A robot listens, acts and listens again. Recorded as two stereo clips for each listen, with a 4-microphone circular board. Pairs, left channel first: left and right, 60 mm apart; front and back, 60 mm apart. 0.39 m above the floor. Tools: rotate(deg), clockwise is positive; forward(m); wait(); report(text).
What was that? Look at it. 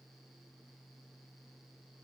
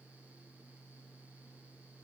wait()
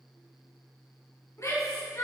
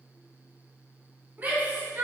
rotate(-125)
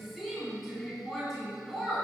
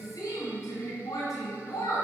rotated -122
report("Facing the shout, 2 to 4 m away.")